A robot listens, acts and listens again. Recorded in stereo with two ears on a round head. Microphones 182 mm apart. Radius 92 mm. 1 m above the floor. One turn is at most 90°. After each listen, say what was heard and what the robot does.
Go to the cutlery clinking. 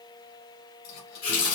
The cutlery clinking: about 65° left or 115° left. Turn 65° left.
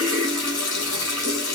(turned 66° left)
Keep listening.
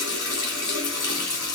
Keep listening.
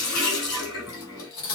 So it is at 50° left. Turn 50° left.
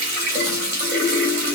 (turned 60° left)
Nothing new. It was at 10° right. Turn 10° right.
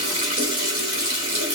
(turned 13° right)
Keep listening.
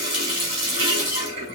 I heard cutlery clinking from this way, but can't make it out now. I did not reach it.